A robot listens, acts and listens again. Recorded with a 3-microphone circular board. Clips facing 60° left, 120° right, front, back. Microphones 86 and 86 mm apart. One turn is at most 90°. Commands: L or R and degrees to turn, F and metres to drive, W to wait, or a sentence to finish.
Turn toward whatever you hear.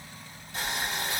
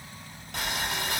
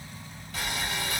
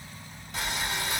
R90
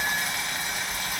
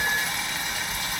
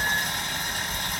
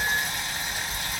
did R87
R25
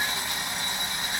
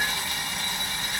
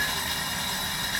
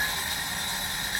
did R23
Found it: boiling, straight ahead, 1 to 2 m away.